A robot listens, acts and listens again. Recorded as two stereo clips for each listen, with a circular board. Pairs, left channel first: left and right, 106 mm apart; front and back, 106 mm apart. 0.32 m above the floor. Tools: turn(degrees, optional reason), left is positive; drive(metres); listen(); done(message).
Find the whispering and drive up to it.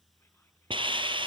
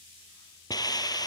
listen()
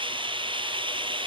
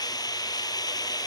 listen()
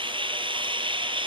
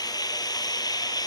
done("I can't make out whispering, only a hiss.")